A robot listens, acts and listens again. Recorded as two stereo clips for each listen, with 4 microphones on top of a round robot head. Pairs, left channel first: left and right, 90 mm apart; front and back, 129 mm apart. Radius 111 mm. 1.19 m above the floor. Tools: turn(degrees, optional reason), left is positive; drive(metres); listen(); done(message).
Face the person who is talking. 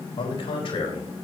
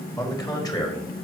turn(degrees=55, reason="The man speaking: 55° left.")
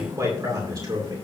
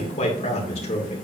turn(degrees=-40, reason="The man speaking is now 40° right.")
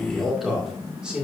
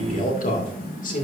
turn(degrees=-10, reason="The man speaking is now 10° right.")
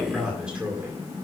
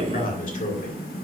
turn(degrees=-15, reason="The man speaking is now 15° right.")
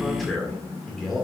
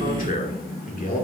done("Found it: a man speaking, straight ahead, 2 to 4 m away.")